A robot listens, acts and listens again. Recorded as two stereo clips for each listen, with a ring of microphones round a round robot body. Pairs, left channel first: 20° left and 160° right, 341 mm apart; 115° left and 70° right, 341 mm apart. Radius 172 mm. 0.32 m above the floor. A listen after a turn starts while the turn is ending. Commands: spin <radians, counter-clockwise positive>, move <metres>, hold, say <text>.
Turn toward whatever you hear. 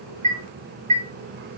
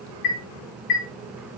spin 2.27
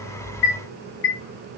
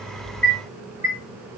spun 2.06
spin 0.26
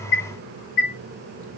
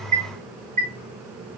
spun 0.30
say Found it: a chime, straight ahead, 2 to 4 m away.